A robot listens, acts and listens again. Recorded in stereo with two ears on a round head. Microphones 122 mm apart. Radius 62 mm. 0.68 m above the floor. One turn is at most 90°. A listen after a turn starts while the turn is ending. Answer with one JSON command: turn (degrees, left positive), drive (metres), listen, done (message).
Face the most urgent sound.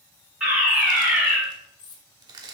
{"turn": -30}
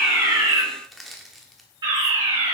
{"turn": -90}
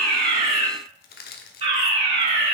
{"turn": -55}
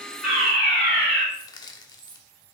{"turn": 10}
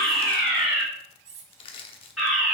{"done": "Found it: a fire alarm, straight ahead."}